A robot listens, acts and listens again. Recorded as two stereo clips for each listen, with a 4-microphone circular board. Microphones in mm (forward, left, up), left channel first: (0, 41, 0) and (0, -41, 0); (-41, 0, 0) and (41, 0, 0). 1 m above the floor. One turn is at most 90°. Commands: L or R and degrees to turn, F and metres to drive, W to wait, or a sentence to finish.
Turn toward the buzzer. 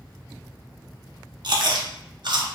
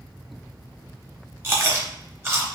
W
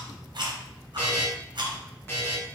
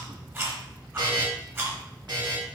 L30
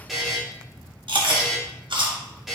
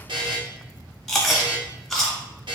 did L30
Facing the buzzer.